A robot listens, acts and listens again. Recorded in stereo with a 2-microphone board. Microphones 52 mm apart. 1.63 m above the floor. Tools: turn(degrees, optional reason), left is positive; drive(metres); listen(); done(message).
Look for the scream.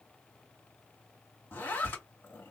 listen()
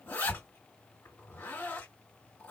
listen()
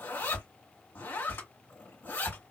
done("I can't make out a scream to turn to.")